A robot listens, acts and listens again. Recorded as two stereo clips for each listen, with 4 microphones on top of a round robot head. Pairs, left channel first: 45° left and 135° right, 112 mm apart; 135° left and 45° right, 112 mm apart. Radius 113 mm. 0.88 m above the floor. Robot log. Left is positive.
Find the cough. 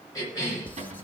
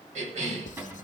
note: The cough: 20° right.
cmd yaw -20
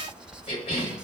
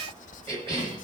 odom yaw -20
end: Facing the cough.